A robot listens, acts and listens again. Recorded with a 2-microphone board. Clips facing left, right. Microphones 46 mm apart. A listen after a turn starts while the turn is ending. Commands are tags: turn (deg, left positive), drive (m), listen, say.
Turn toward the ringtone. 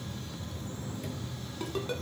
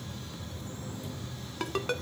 <turn deg="-75"/>
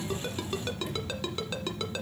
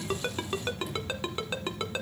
<turn deg="-25"/>
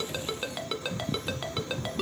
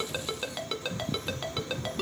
<say>Found it: a ringtone, straight ahead, 1 to 2 m away.</say>